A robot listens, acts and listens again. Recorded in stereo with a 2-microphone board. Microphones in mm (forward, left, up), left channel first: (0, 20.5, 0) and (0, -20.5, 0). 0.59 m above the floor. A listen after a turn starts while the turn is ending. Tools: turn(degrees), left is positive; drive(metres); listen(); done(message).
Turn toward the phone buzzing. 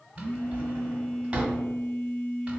turn(degrees=45)
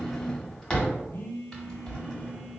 turn(degrees=90)
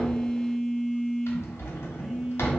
done("Facing the phone buzzing, 1 to 2 m away.")